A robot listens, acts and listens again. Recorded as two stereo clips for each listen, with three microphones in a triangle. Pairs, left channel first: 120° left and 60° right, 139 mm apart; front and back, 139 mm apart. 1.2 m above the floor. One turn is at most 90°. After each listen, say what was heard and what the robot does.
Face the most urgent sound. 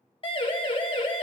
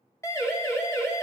The siren: 70° left. Turn 70° left.
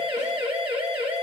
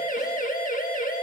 The siren is now 10° right. Turn 10° right.
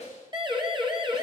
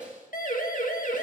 Facing the siren, 2 to 4 m away.